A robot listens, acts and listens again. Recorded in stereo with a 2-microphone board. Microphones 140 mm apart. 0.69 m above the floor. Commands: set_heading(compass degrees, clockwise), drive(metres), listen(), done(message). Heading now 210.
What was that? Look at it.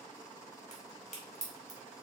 set_heading(155)
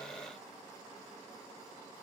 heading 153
listen()
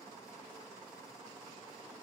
done("I heard a crack, but can't make it out now. It was about straight ahead or 65° left.")